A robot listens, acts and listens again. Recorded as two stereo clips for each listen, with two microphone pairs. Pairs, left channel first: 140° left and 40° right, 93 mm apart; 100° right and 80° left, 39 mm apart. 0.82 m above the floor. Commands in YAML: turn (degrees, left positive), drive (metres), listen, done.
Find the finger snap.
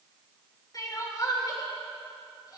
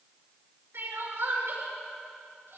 listen: true
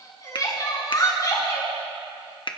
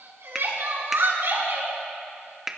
turn: 155
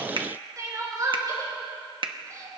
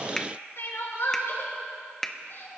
turn: -25
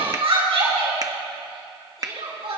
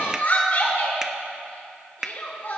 done: "Facing the finger snap."